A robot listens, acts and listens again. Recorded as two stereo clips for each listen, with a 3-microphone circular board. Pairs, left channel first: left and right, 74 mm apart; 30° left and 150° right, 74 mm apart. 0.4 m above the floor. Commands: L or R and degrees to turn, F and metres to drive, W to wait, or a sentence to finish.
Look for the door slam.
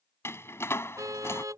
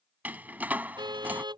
L145
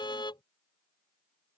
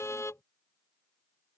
I heard a door slam from this way, but can't make it out now.